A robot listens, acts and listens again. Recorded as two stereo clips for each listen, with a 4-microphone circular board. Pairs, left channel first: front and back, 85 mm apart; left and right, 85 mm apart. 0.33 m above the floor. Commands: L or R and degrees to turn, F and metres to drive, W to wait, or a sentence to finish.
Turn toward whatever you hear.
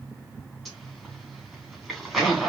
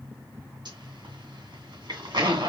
R85
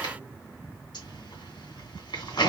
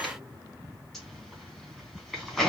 Facing the zipper.